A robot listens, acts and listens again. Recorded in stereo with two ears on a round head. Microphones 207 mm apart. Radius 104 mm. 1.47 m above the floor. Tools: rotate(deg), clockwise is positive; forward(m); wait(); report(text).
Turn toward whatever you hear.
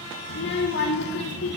rotate(-50)
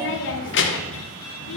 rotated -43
rotate(-70)
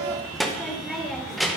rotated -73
report("Facing the child speaking.")